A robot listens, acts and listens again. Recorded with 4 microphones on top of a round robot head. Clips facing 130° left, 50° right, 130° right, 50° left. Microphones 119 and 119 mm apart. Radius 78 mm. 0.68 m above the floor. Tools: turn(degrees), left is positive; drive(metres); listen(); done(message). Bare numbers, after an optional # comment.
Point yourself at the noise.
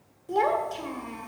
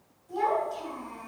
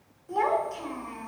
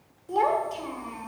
# The child speaking: 115° left.
turn(115)
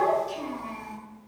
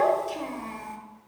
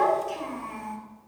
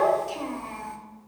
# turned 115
# The child speaking is now 10° right.
turn(-10)
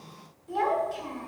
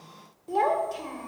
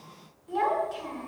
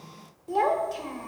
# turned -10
done("Found it: a child speaking, straight ahead.")